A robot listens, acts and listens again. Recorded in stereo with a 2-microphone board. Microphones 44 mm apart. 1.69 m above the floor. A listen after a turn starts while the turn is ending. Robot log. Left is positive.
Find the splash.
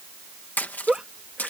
note: The splash: about 40° left or 140° left.
cmd yaw +40
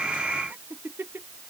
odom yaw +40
cmd idle
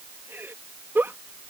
end: I heard a splash, but can't make it out now. It was about straight ahead or 100° left.